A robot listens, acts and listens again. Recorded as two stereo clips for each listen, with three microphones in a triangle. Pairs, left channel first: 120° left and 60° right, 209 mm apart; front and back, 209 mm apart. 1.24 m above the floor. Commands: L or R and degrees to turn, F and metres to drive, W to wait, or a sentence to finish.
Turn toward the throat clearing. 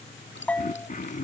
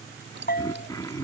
L70
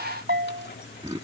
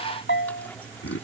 Facing the throat clearing.